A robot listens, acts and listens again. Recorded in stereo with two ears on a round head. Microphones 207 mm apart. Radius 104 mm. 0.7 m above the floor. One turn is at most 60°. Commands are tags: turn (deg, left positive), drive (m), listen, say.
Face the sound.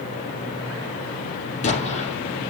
<turn deg="30"/>
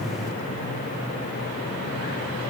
<listen/>
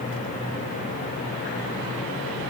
<say>I heard an explosion, but can't make it out now. It was about straight ahead or 120° left.</say>